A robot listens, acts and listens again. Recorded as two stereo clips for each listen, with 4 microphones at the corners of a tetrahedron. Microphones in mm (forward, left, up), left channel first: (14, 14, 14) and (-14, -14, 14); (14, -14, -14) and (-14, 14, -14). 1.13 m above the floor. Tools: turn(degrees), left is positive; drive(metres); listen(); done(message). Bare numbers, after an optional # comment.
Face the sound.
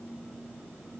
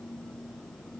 listen()
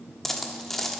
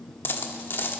# The dropped coin: 35° right.
turn(-35)
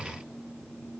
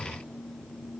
done("Facing where the dropped coin came from. I can't hear it now.")